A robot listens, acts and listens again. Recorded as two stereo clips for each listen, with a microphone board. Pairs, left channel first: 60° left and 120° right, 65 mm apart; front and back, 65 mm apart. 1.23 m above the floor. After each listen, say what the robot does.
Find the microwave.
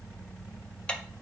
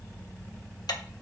Keep listening.
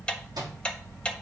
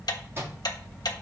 Turn 130° right.
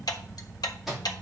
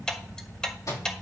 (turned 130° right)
Turn 35° right.
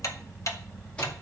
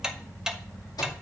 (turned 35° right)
Turn 15° right.
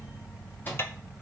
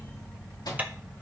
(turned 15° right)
Facing the microwave, 2 to 4 m away.